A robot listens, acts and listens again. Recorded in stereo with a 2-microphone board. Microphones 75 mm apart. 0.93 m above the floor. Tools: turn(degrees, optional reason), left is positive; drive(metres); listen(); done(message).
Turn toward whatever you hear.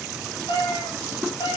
turn(degrees=90)
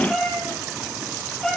turn(degrees=10, reason="So it is at 10° left.")
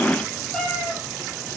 turn(degrees=10, reason="The cat meowing is now 10° left.")
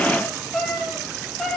turn(degrees=10, reason="The cat meowing is now 10° left.")
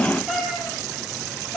done("Facing the cat meowing, over 4 m away.")